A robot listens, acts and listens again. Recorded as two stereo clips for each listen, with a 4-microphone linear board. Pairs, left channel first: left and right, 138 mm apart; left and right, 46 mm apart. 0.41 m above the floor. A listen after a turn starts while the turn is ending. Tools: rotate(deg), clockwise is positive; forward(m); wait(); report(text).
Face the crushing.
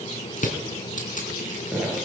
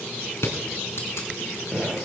rotate(-65)
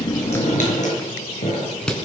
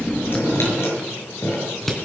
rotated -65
report("Found it: crushing, straight ahead, 2 to 4 m away.")